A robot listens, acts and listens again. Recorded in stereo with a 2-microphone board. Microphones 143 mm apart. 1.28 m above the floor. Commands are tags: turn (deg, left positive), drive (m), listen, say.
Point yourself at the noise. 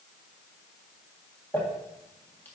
<turn deg="30"/>
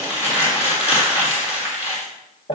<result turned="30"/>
<turn deg="135"/>
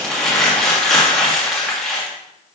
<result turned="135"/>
<say>Facing the crumpling.</say>